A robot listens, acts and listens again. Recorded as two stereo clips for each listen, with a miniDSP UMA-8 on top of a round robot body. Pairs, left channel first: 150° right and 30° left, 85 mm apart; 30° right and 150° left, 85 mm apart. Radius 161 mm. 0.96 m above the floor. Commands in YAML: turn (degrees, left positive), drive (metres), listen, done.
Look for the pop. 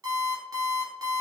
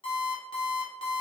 listen: true
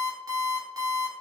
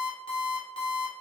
listen: true
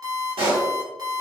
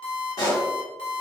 turn: 15
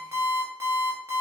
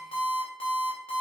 done: "I heard a pop from this way, but can't make it out now."